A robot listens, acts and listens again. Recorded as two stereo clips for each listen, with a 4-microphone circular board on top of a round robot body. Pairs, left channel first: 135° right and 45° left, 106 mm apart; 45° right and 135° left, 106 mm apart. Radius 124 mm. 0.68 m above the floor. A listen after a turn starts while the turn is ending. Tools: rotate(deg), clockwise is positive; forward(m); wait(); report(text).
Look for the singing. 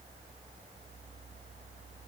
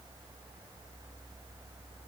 wait()
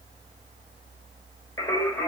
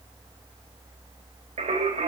rotate(-155)
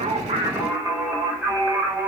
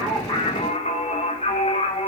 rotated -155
rotate(30)
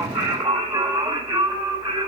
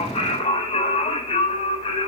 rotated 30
report("Facing the singing.")